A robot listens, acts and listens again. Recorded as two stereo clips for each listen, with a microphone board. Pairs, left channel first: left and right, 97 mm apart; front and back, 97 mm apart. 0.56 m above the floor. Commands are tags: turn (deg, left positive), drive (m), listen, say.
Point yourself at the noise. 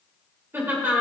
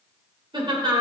<turn deg="-155"/>
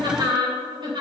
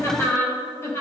<turn deg="-60"/>
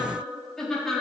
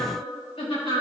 <say>Facing the laughter, 2 to 4 m away.</say>